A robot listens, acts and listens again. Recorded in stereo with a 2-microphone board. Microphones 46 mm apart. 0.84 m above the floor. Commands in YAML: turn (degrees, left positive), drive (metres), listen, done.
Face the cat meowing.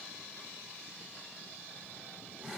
listen: true
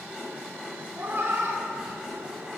turn: -60
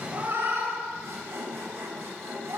turn: -65
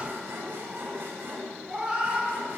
turn: -20
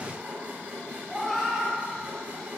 done: "Found it: a cat meowing, straight ahead."